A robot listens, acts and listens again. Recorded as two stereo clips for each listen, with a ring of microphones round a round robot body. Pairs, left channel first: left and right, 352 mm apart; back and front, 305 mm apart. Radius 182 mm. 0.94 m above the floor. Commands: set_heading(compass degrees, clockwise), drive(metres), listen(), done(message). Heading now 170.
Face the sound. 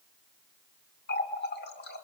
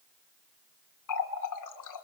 set_heading(15)
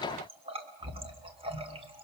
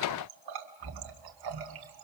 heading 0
set_heading(15)
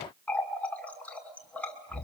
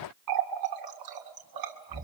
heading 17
done("Found it: a running tap, straight ahead, 2 to 4 m away.")